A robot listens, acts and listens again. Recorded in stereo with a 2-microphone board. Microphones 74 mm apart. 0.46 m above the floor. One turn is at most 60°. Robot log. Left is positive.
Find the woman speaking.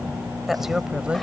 cmd yaw -30
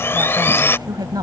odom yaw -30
note: So it is at 120° right.
cmd yaw -60
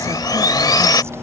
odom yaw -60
note: Nothing new. It was at 60° right.
cmd yaw -60
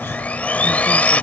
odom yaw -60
cmd idle
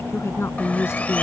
note: The woman speaking is now 35° left.
cmd yaw +35
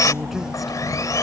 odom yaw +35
cmd idle
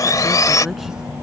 cmd idle
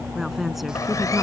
end: Found it: a woman speaking, straight ahead.